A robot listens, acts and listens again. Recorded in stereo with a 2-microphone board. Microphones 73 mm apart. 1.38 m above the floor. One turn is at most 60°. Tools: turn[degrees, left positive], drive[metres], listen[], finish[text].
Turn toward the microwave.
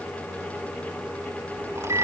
Thought: The microwave: about 65° right or 115° right.
Action: turn[-60]
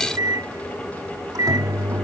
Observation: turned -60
Thought: So it is at 60° right.
Action: turn[-60]
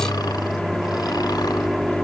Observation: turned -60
Action: finish[Facing the microwave.]